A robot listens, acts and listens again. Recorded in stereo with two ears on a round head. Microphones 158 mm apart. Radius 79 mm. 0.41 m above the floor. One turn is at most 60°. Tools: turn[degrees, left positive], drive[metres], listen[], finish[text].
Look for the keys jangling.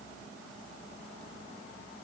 Action: listen[]
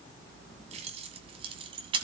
Thought: The keys jangling: about 30° right or 150° right.
Action: turn[-30]
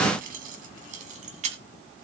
Thought: So it is at 135° right.
Action: turn[-60]
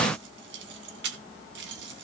Thought: The keys jangling is now 75° right.
Action: turn[-60]
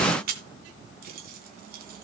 Thought: The keys jangling is now 55° right.
Action: turn[-55]
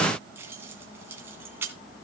Thought: The keys jangling is now 10° right.
Action: turn[-10]
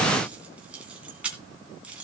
Action: finish[Found it: keys jangling, straight ahead, 2 to 4 m away.]